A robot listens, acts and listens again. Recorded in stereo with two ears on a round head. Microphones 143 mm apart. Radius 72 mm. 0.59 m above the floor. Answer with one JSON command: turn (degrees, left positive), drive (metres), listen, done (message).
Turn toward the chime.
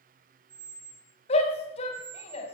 {"listen": true}
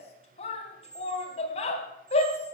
{"listen": true}
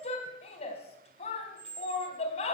{"done": "I can't make out a chime to turn to."}